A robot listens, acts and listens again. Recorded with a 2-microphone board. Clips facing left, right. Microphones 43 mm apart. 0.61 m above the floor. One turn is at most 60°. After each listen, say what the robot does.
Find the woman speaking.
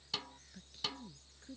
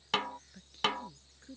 Turn 30° right.
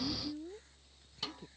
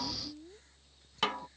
Turn 20° left.
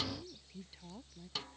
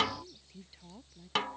Facing the woman speaking.